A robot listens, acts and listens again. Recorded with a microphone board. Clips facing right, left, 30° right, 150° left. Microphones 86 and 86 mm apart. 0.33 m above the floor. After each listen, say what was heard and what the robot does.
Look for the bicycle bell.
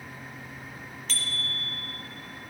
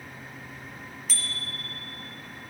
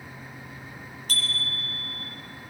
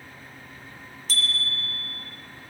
The bicycle bell: 10° left. Turn 10° left.
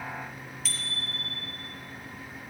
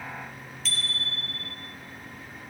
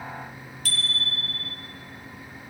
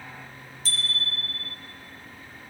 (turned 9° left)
Found it: a bicycle bell, straight ahead.